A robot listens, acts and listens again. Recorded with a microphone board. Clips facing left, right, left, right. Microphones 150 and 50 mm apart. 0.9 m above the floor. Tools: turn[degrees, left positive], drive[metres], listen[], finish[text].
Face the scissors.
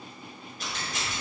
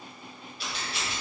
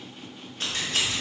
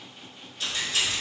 Thought: The scissors: about 45° left or 135° left.
Action: turn[45]
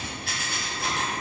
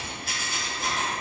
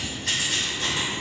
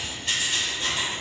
Thought: So it is at 80° left.
Action: turn[80]
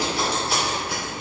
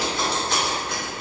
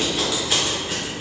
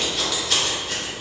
Thought: The scissors is now 10° left.
Action: turn[10]
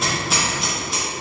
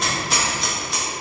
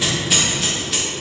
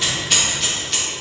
Action: finish[Facing the scissors, 1 to 2 m away.]